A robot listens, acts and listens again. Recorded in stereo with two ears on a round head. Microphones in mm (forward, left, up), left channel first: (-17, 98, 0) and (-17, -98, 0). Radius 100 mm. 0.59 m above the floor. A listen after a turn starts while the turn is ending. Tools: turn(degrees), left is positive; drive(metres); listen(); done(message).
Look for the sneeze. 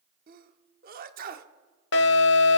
turn(degrees=-45)
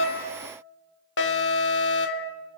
listen()
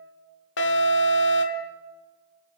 done("I heard a sneeze, but can't make it out now. It was about straight ahead or 90° right.")